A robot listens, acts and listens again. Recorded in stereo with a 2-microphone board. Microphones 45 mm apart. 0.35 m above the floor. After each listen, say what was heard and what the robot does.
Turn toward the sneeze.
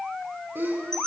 The sneeze: about 50° right or 130° right. Turn 50° right.
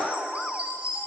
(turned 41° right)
Keep listening.
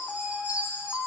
I heard a sneeze, but can't make it out now. It was about 10° right or 85° right.